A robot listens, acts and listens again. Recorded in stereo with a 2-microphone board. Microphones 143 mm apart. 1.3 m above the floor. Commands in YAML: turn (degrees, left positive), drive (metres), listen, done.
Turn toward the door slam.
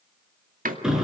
turn: -70
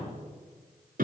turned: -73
listen: true
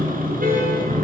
done: "I heard a door slam, but can't make it out now. It was about straight ahead or 35° right."